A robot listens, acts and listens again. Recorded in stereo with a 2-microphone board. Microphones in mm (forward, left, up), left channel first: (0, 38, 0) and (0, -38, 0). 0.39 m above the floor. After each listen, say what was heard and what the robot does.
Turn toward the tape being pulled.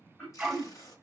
The tape being pulled: about 55° left or 125° left. Turn 55° left.
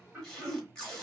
So it is at 10° left. Turn 10° left.
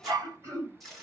Facing the tape being pulled.